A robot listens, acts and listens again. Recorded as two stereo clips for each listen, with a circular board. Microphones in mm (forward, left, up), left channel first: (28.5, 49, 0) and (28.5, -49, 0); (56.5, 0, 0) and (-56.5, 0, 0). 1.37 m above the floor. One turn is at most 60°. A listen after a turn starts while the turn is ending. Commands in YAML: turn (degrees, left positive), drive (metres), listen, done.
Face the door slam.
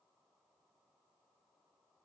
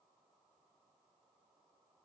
listen: true
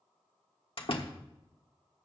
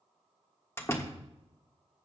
turn: 60
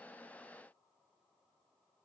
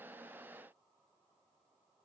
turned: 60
done: "Facing where the door slam came from. I can't hear it now."